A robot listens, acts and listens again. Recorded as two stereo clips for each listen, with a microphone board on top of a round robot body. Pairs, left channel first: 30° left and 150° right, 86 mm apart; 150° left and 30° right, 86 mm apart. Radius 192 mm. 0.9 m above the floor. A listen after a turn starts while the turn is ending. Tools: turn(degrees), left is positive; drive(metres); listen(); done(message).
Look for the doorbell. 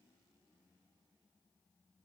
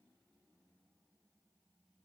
listen()
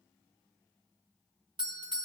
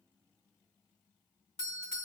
turn(degrees=-160)
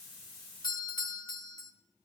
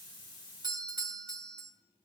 done("Found it: a doorbell, straight ahead.")